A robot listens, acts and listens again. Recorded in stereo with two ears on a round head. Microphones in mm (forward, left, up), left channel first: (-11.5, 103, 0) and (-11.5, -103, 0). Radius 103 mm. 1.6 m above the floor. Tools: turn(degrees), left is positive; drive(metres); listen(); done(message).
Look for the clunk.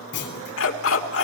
turn(degrees=55)
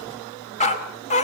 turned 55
listen()
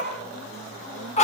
done("I heard a clunk, but can't make it out now. It was about straight ahead or 70° left.")